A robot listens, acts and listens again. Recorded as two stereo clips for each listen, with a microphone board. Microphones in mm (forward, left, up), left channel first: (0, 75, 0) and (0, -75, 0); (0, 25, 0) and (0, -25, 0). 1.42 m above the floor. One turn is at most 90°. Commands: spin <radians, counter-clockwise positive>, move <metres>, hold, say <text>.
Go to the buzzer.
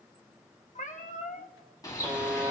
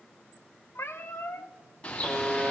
spin -0.52
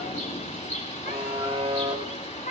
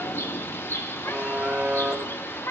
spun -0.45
spin -1.57
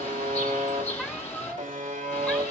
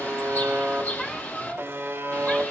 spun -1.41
spin -1.05
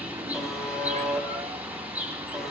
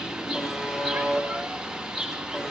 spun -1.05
move 1.0
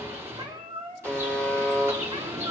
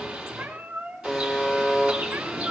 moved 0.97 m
spin 0.17
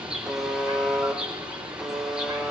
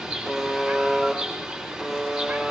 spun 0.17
move 1.0
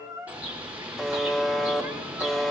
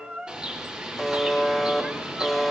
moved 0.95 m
move 1.0
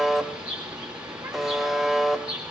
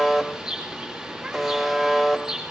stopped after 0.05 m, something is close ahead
say I am next to the buzzer.